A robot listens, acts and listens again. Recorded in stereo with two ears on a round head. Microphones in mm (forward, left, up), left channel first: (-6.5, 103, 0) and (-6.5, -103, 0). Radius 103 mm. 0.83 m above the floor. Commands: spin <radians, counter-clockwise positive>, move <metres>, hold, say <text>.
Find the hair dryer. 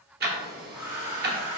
spin -0.52
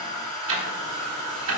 spin 0.35
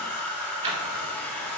say Found it: a hair dryer, straight ahead, 1 to 2 m away.